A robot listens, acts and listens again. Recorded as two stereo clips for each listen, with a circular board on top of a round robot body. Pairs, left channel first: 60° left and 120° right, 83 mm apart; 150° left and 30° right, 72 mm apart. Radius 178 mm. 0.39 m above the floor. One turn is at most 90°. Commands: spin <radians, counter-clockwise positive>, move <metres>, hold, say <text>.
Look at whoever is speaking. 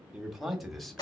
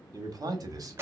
spin -0.44
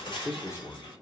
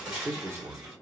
spin 0.35
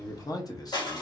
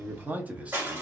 spin 0.70
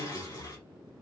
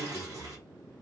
hold
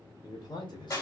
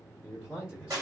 spin 0.96
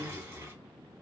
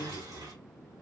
hold
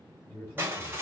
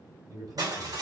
say Found it: a man speaking, straight ahead, 2 to 4 m away.